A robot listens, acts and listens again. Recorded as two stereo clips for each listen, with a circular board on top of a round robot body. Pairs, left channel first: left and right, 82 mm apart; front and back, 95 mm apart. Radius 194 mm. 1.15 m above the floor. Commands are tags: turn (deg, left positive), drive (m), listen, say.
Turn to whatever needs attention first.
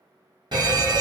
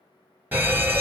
<turn deg="-110"/>
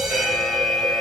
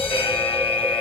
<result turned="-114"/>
<say>Found it: a fire alarm, straight ahead.</say>